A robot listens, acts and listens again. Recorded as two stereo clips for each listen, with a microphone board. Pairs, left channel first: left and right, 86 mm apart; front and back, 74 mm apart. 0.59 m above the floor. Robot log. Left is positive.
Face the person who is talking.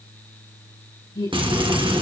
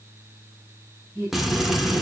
note: The woman speaking: 100° left.
cmd yaw +100
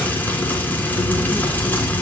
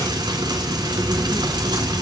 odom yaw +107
note: Nothing new. It was at 10° right.
cmd yaw -10
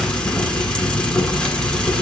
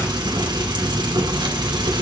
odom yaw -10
cmd idle
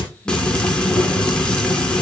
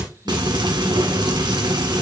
end: Facing where the woman speaking came from. I can't hear it now.